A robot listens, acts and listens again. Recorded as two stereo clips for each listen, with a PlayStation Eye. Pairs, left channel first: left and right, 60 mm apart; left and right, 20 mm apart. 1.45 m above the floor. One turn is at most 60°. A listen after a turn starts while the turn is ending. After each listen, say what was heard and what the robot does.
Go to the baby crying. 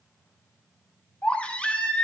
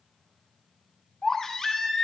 The baby crying: about 20° left or 160° left. Turn 20° left.
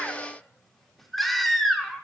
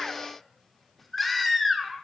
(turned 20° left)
Drive 1.0 m forward.
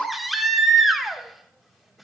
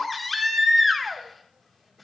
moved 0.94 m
Drive 1.0 m forward.
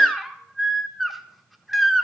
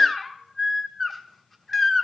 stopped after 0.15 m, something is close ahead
I am next to the baby crying.